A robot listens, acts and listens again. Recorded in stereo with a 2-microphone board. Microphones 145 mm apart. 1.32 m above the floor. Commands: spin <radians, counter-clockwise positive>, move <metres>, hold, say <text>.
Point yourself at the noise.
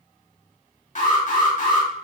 spin 0.96
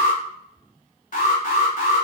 spin 1.13
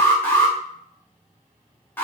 spin 0.26
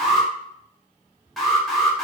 say Facing the alarm.